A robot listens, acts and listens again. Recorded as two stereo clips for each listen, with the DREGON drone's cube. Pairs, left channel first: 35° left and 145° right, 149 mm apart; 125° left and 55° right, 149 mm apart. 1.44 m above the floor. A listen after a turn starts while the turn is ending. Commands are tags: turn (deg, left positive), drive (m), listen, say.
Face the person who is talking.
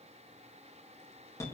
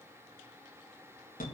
<listen/>
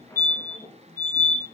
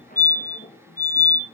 <listen/>
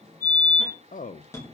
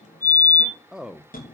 <turn deg="30"/>
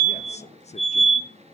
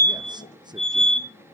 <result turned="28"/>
<listen/>
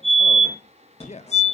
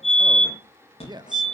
<say>Found it: a man speaking, straight ahead.</say>